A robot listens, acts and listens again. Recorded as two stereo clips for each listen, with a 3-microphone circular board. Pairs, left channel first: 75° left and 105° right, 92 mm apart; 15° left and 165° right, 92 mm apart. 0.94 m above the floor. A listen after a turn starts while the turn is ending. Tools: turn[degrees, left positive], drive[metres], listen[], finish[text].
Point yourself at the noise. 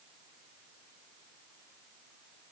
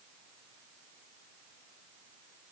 Action: listen[]
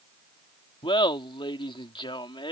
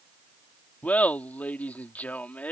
Thought: The laughter: 85° left.
Action: turn[85]
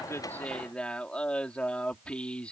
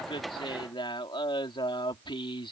Action: finish[Found it: laughter, straight ahead.]